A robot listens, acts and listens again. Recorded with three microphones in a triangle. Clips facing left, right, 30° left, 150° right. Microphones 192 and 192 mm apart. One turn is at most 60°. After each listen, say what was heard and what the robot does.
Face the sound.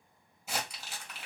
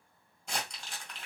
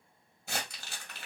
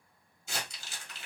The crumpling: 10° left. Turn 10° left.
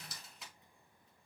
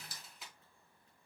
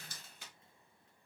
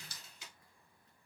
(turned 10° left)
Found it: crumpling, straight ahead, 1 to 2 m away.